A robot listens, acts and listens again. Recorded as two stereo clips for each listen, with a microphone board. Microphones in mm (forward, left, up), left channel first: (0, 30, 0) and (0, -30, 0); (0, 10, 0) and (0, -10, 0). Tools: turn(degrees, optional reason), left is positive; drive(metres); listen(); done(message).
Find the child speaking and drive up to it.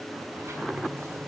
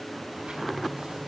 listen()
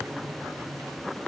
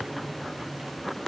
listen()
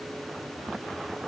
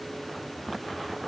done("I can't make out a child speaking.")